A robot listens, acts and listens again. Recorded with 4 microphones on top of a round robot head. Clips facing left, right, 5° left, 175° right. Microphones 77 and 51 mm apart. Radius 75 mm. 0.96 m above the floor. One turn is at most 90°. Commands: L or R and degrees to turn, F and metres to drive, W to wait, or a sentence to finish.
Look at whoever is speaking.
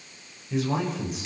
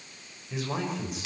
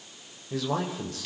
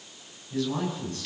Found it: a man speaking, straight ahead, over 4 m away.